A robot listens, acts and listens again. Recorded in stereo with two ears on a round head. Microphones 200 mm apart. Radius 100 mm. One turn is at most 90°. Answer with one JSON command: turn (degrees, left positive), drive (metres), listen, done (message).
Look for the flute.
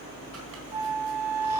{"turn": -30}
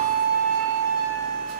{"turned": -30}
{"turn": -90}
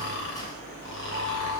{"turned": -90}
{"turn": -35}
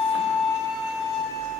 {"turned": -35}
{"turn": 15}
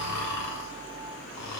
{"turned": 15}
{"listen": true}
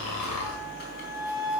{"done": "Facing the flute, 2 to 4 m away."}